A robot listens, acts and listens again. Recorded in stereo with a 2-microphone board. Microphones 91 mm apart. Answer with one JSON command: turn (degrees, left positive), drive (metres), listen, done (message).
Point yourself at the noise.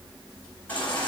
{"turn": 15}
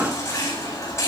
{"turn": 145}
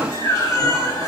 {"turn": 35}
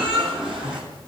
{"turn": -10}
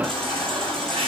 {"done": "Facing the baby crying."}